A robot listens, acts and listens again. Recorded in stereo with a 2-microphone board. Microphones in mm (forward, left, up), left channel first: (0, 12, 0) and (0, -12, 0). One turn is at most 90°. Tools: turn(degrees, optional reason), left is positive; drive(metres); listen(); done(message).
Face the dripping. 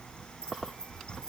listen()
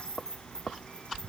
listen()
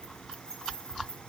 done("I can't make out dripping to turn to.")